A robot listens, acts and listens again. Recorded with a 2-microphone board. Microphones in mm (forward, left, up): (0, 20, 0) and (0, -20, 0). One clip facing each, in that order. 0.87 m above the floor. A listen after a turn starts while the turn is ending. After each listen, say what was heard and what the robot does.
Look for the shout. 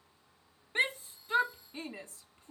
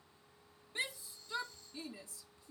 The shout: about 45° left or 135° left. Turn 45° left.
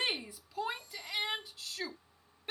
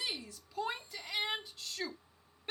Found it: a shout, straight ahead.